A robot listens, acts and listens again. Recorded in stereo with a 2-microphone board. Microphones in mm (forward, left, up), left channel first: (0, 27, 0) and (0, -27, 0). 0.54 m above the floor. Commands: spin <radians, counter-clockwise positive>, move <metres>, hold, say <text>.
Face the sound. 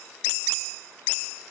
hold
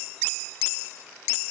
hold
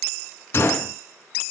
spin 0.79
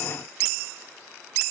hold
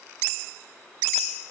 say I heard a gunshot, but can't make it out now. It was about straight ahead or 90° left.